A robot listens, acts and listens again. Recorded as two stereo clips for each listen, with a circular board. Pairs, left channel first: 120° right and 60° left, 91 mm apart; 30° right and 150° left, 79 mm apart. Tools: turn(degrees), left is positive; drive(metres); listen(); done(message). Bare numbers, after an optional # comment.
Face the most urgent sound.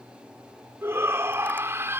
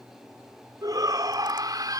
# The shout: 120° left.
turn(120)
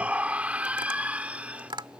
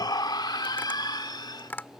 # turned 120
# The shout is now 15° right.
turn(-15)
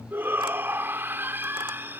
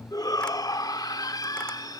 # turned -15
done("Facing the shout.")